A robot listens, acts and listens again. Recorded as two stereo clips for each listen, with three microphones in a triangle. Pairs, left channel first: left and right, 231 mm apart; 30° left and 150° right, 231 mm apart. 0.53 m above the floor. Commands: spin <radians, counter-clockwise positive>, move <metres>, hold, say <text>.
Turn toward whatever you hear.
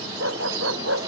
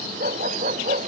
spin -1.66
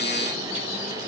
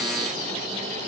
hold
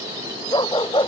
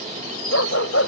spin 0.35
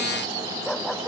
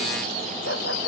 hold
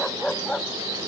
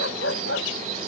say Facing the dog barking.